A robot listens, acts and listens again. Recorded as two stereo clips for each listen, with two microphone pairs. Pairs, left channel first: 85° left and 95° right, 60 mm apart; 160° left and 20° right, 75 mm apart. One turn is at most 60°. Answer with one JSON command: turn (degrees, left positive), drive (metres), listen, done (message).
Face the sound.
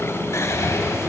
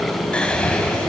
{"turn": 60}
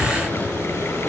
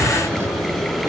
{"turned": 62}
{"turn": 30}
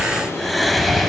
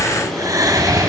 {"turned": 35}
{"done": "Found it: whispering, straight ahead, 1 to 2 m away."}